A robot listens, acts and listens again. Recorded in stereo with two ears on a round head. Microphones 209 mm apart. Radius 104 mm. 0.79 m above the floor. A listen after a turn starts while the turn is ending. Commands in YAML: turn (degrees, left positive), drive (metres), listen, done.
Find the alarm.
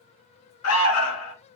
turn: 65
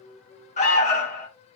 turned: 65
turn: 30
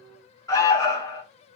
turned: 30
turn: 15
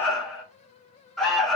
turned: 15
done: "Found it: an alarm, straight ahead."